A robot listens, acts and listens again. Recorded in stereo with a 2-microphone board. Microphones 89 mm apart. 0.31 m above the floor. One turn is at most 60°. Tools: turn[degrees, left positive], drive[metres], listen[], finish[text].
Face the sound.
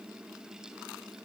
Action: listen[]
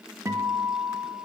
Thought: The guitar: about 35° right or 145° right.
Action: turn[-35]
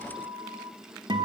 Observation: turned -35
Thought: So it is at 110° right.
Action: turn[-60]
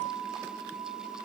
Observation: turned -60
Thought: The guitar is now 75° right.
Action: turn[-60]
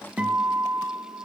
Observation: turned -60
Thought: The guitar is now 15° right.
Action: turn[-15]
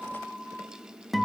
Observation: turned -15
Action: finish[Found it: a guitar, straight ahead, under 1 m away.]